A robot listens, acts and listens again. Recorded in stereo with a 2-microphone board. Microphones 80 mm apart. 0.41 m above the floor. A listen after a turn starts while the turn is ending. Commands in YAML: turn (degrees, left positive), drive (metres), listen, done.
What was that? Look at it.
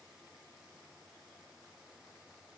listen: true
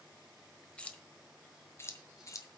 turn: 45
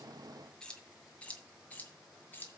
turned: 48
turn: 25
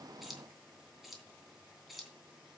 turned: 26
done: "Facing the keys jangling, 2 to 4 m away."